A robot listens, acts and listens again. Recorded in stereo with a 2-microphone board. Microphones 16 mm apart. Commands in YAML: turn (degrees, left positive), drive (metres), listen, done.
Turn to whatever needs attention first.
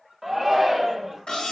turn: -30
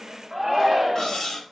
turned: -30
turn: -140
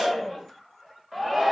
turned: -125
turn: -15
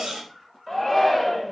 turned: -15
done: "Facing the shout, 1 to 2 m away."